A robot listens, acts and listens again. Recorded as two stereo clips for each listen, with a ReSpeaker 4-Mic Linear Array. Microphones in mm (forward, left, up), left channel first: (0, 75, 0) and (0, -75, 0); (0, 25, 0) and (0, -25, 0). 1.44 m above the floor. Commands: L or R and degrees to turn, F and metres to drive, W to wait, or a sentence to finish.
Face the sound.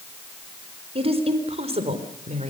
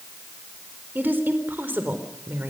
R50
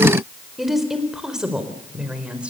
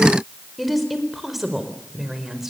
Facing the woman speaking, over 4 m away.